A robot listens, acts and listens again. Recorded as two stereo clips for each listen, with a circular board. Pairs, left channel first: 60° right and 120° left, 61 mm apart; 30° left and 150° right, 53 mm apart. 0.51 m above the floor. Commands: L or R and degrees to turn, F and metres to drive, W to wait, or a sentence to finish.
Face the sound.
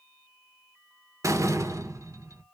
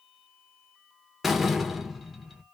L125
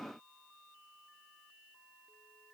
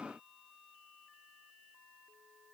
I heard a door slam from this way, but can't make it out now.